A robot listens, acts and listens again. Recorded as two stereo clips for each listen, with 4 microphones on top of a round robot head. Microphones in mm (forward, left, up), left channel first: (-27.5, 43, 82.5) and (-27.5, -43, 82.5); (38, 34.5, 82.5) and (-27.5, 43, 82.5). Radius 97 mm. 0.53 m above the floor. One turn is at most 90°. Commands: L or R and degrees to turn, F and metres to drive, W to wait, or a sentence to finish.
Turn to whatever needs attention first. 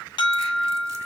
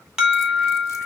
L90
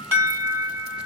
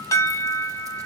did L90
R25
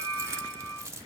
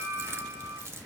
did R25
Found it: an alarm, straight ahead.